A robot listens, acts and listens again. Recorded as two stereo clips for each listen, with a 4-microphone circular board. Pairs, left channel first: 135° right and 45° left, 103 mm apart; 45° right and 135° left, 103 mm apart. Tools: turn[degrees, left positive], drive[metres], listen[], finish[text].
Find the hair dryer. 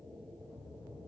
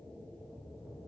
Action: listen[]
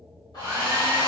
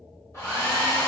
Thought: The hair dryer: 100° right.
Action: turn[-100]
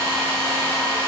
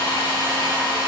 Action: finish[Facing the hair dryer.]